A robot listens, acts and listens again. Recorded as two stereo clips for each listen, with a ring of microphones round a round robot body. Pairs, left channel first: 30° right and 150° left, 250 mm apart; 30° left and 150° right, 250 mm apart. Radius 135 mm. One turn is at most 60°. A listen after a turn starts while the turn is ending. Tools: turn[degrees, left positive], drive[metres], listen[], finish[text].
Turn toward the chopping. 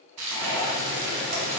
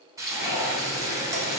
Action: listen[]
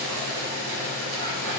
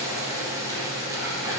Action: listen[]
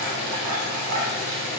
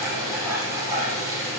Action: finish[I can't make out chopping to turn to.]